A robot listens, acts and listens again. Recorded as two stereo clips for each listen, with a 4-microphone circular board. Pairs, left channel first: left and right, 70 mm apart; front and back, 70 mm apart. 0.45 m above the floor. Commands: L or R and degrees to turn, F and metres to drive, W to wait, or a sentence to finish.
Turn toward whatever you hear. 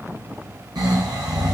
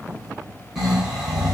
R95
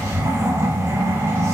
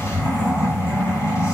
R40
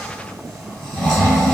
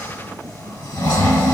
Facing the snoring, 2 to 4 m away.